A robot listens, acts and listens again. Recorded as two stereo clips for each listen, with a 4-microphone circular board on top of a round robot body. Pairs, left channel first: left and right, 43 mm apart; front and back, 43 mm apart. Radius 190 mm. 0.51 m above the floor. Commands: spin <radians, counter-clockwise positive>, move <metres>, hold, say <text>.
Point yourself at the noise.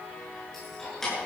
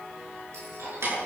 spin 3.05
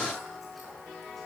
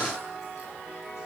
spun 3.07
hold
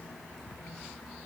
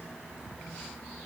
hold
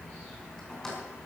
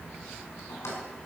spin 0.26
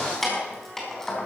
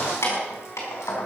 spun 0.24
spin 0.17
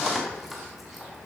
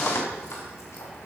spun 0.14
say Found it: keys jangling, straight ahead, 2 to 4 m away.